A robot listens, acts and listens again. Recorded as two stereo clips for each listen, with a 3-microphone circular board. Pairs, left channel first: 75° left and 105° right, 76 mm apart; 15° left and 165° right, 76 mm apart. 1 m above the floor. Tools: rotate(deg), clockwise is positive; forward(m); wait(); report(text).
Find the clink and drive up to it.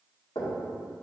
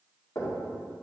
wait()
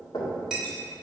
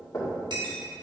rotate(-175)
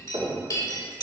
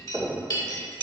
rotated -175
rotate(-35)
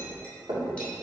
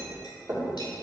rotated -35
wait()
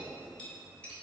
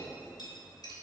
wait()
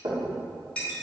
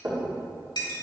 forward(1.0)
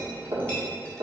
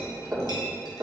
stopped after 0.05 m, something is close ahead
wait()
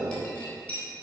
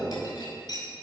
report("Something is in my way. I am facing the clink but have not reached it.")